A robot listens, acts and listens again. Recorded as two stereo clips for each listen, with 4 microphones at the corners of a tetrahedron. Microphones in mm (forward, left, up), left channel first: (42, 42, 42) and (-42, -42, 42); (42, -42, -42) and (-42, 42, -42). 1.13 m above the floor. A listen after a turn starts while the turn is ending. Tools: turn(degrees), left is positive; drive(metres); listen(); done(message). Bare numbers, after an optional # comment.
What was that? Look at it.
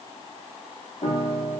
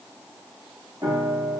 # The piano: 75° left.
turn(75)
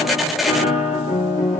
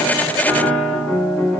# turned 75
# The piano is now 35° left.
turn(35)
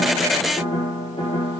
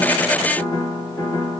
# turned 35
done("Facing the piano, 1 to 2 m away.")